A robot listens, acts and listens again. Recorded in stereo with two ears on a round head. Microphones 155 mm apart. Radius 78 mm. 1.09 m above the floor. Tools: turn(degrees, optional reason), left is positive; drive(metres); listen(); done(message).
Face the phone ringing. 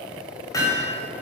listen()
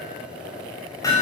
listen()
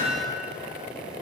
done("I can't make out a phone ringing to turn to.")